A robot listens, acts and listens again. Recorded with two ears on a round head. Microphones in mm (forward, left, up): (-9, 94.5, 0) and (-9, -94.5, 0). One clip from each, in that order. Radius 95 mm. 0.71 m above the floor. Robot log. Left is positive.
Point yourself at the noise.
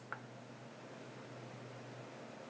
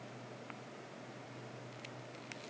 cmd idle
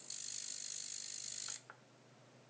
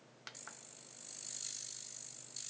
cmd idle
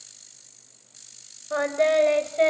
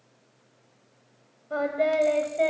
note: The singing: about 55° left or 125° left.
cmd yaw +55
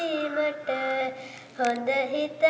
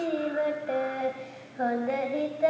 note: So it is at 70° left.
cmd yaw +70
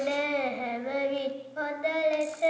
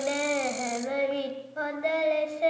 end: Facing the singing, 2 to 4 m away.